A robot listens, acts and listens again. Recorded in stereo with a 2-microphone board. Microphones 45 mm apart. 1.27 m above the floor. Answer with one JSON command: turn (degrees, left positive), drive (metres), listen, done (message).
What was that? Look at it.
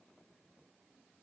{"listen": true}
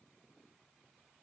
{"listen": true}
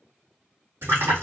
{"turn": -90}
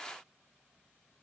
{"done": "Facing where the splash came from. I can't hear it now."}